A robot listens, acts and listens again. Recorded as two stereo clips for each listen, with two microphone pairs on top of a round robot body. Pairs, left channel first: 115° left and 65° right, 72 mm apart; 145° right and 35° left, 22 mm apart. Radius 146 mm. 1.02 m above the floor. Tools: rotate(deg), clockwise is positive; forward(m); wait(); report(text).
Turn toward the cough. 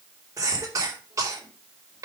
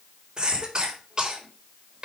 rotate(20)
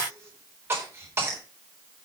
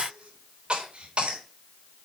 report("Facing the cough, over 4 m away.")